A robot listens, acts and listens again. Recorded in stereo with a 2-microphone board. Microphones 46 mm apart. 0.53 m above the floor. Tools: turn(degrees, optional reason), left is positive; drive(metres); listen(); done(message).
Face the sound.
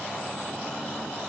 listen()
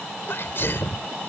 turn(degrees=60, reason="The sneeze: about 60° left or 120° left.")
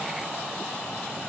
listen()
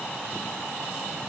done("I heard a sneeze, but can't make it out now. It was about straight ahead or 60° left.")